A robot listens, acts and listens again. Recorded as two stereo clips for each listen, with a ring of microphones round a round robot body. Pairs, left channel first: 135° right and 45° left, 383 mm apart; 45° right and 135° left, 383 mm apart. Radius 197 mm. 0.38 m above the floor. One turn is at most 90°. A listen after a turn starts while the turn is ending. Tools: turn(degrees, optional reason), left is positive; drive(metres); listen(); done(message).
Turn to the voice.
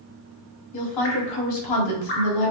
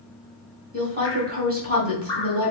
turn(degrees=-90, reason="The woman speaking: 160° right.")
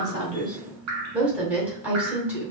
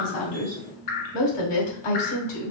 turn(degrees=-40, reason="The woman speaking is now 40° right.")
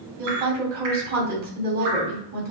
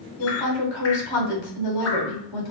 turn(degrees=-20, reason="The woman speaking is now 20° right.")
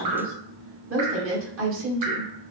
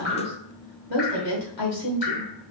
turn(degrees=-10, reason="The woman speaking is now 10° right.")
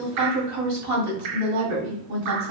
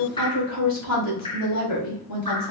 done("Found it: a woman speaking, straight ahead, 2 to 4 m away.")